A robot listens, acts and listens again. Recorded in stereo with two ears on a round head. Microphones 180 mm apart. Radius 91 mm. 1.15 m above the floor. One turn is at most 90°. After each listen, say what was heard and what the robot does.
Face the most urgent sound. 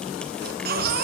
The baby crying: about 55° right or 125° right. Turn 55° right.
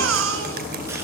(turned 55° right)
So it is at 70° right. Turn 70° right.
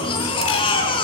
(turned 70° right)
The baby crying is now 25° left. Turn 25° left.
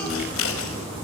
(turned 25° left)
Keep listening.
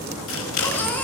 The baby crying is now 10° left. Turn 10° left.
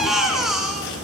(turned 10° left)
Found it: a baby crying, straight ahead, over 4 m away.